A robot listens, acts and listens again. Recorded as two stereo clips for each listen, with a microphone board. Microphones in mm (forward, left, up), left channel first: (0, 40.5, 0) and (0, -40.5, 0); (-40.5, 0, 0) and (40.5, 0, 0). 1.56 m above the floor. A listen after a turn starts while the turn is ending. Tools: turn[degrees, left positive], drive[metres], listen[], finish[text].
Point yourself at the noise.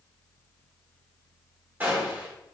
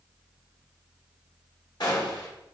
Thought: The gunshot: 155° right.
Action: turn[-155]
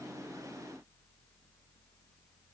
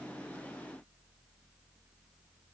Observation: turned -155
Action: finish[Facing where the gunshot came from. I can't hear it now.]